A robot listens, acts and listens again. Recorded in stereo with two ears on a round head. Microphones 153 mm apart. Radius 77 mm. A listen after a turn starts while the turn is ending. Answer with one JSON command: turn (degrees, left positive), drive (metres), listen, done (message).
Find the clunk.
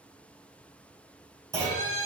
{"turn": -20}
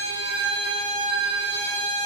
{"listen": true}
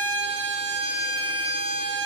{"done": "I heard a clunk, but can't make it out now. It was about straight ahead or 140° right."}